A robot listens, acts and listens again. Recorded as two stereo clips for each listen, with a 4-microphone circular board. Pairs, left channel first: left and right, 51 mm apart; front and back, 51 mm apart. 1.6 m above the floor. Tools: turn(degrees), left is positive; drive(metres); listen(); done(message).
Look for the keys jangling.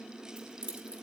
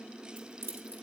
turn(degrees=-155)
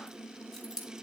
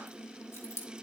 turn(degrees=-10)
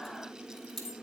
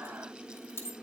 done("Found it: keys jangling, straight ahead, 1 to 2 m away.")